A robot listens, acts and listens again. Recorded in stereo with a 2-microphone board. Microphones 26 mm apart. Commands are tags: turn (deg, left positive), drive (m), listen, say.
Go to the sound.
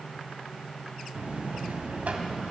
<turn deg="-70"/>
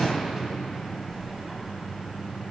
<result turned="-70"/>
<turn deg="-10"/>
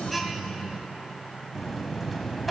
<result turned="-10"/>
<drive m="1.0"/>
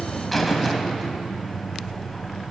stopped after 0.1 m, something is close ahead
<say>Blocked. The buzzer is further on, straight ahead.</say>